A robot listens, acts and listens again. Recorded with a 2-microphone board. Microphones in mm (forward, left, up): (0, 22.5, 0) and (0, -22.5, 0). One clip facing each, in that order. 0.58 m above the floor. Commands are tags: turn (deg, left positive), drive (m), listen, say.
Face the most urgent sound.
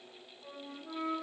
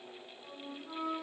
<listen/>
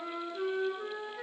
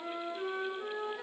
<listen/>
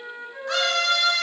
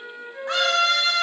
<turn deg="-30"/>
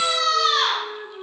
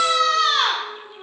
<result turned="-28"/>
<turn deg="-115"/>
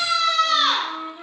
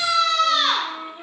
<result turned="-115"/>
<say>Facing the scream, 1 to 2 m away.</say>